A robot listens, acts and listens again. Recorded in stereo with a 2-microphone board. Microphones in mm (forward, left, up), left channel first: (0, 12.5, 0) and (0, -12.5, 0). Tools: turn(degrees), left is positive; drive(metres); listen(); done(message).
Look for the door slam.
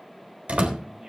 turn(degrees=-55)
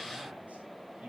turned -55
listen()
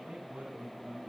done("I heard a door slam, but can't make it out now. It was about straight ahead or 70° right.")